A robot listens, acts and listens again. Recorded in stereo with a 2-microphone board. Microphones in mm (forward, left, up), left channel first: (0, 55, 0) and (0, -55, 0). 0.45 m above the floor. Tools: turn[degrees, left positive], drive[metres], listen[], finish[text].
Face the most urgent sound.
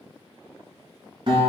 Action: listen[]
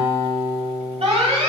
Thought: The alarm: about 65° right or 115° right.
Action: turn[-65]
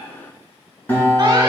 Action: listen[]
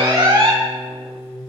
Thought: So it is at 40° right.
Action: turn[-40]
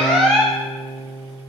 Action: finish[Found it: an alarm, straight ahead.]